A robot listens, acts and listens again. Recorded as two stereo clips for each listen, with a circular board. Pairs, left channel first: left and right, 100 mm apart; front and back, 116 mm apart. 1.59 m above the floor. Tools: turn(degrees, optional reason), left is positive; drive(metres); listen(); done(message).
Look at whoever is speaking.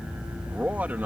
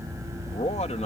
turn(degrees=-15, reason="The man speaking: 15° right.")
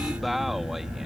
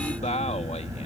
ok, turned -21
done("Facing the man speaking.")